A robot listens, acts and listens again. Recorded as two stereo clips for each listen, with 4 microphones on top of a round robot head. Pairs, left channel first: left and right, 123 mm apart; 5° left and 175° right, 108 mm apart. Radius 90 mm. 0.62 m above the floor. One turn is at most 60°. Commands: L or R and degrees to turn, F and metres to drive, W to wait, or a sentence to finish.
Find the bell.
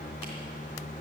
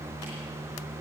W
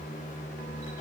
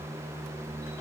W
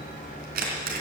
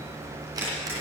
I can't make out a bell, only a camera shutter.